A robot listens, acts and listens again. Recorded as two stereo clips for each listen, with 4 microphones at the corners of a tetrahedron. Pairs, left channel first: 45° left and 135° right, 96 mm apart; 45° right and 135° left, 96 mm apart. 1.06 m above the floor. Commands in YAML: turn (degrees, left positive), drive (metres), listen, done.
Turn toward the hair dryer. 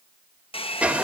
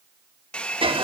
turn: 35
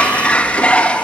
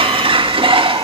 listen: true
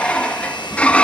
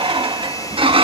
listen: true
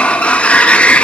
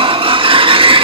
done: "Facing where the hair dryer came from. I can't hear it now."